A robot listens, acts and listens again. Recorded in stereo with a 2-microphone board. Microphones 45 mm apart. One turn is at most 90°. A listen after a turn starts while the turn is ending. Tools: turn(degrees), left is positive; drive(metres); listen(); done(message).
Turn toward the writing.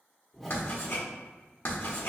turn(degrees=55)
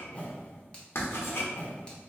turn(degrees=70)
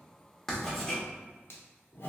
turn(degrees=10)
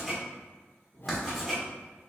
done("Facing the writing.")